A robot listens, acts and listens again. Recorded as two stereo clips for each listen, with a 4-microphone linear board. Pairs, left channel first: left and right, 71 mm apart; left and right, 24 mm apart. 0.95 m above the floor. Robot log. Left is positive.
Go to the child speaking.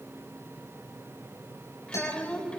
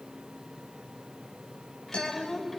cmd yaw +30
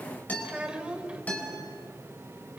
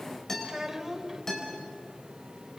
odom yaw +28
note: So it is at 15° right.
cmd yaw -15
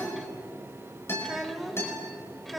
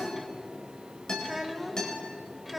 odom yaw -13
cmd fwd 1.0
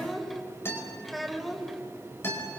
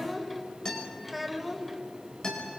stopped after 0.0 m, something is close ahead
end: Something is in my way. I am facing the child speaking but have not reached it.